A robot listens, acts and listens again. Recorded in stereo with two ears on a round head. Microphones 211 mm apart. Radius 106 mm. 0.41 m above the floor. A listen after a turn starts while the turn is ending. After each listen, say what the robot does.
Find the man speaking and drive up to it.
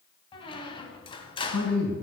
Turn 70° left.
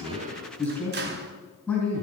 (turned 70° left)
Drive 1.0 m forward.
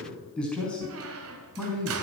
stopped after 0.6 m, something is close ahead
Blocked. The man speaking is further on, straight ahead.